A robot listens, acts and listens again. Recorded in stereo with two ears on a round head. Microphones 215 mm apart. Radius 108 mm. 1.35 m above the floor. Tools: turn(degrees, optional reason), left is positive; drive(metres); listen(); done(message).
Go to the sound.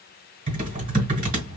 turn(degrees=-35, reason="The typing on a keyboard: about 35° right or 145° right.")
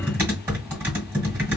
turn(degrees=-10, reason="So it is at 10° right.")
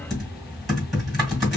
drive(metres=1.0)
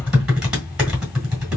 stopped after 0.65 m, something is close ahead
done("Arrived at the typing on a keyboard, straight ahead.")